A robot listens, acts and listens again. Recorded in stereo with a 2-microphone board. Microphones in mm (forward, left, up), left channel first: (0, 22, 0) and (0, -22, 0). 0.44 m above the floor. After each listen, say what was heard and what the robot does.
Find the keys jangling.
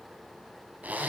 Keep listening.
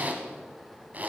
Keep listening.
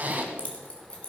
The keys jangling: about 25° left or 155° left. Turn 25° left.
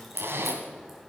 Found it: keys jangling, straight ahead.